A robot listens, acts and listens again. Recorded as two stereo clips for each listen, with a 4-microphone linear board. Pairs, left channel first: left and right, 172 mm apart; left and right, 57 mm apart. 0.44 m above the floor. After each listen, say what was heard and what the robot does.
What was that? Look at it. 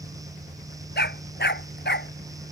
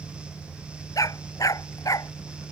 Turn 90° left.
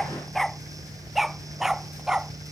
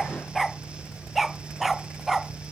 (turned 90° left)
Facing the dog barking.